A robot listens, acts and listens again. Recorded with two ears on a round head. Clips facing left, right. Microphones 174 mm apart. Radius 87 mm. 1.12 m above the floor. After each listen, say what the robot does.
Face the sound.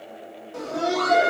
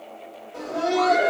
Turn 50° left.
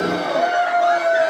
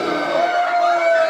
Found it: laughter, straight ahead.